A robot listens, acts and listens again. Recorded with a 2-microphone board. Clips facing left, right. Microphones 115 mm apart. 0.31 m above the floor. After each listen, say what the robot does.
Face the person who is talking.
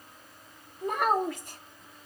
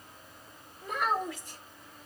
Turn 60° left.
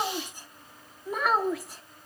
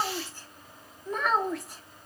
Found it: a child speaking, straight ahead, 1 to 2 m away.